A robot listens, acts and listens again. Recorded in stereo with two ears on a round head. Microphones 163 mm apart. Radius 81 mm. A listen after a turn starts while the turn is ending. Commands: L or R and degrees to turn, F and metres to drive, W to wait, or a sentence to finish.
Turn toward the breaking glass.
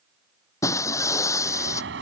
L15
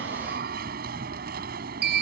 W
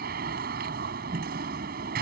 I heard breaking glass, but can't make it out now. It was about straight ahead or 150° left.